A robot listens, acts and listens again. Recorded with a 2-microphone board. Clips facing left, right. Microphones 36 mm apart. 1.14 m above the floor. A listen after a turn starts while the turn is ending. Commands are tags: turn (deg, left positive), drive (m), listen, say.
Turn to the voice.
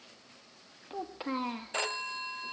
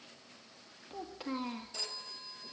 <turn deg="25"/>
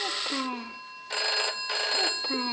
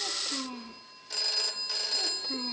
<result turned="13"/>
<turn deg="145"/>
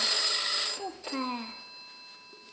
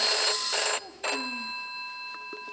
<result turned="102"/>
<turn deg="40"/>
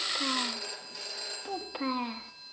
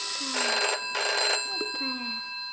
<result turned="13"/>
<turn deg="30"/>
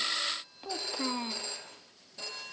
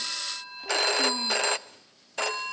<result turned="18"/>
<turn deg="10"/>
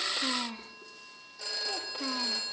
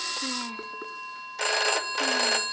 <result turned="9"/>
<say>Facing the child speaking.</say>